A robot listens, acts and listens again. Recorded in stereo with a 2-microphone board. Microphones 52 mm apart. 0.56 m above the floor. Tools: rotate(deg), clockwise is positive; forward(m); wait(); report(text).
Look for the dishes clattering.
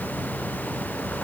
wait()
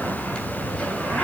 wait()
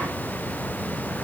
report("I can't make out dishes clattering, only a zipper.")